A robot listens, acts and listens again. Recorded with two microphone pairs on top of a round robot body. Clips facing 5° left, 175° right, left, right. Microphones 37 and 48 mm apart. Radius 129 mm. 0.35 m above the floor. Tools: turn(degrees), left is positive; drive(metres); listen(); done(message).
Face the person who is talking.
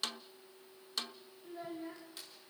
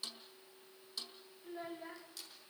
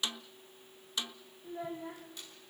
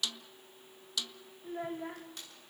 turn(degrees=-115)
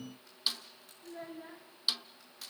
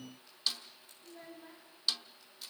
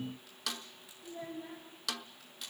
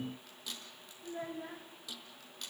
turn(degrees=-55)
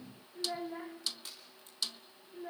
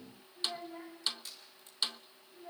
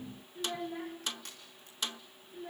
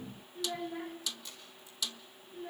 done("Facing the child speaking.")